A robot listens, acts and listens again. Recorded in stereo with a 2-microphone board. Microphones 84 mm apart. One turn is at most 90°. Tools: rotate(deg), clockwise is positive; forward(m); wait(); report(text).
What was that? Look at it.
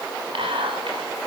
rotate(90)
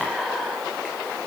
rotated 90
report("Facing the whispering.")